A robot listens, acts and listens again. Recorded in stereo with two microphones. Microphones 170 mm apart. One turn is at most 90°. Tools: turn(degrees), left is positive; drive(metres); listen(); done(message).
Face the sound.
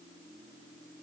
listen()
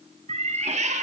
turn(degrees=-50)
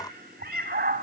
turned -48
turn(degrees=-70)
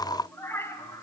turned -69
turn(degrees=20)
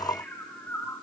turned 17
turn(degrees=15)
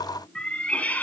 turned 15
turn(degrees=10)
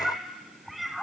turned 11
done("Facing the cat meowing.")